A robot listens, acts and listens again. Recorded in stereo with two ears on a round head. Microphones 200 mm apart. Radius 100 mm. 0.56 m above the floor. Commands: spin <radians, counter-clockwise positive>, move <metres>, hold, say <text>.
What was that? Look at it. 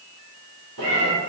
spin -1.22
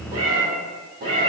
spin -0.87
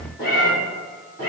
spin 0.17
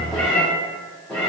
say Found it: a cat meowing, straight ahead, 2 to 4 m away.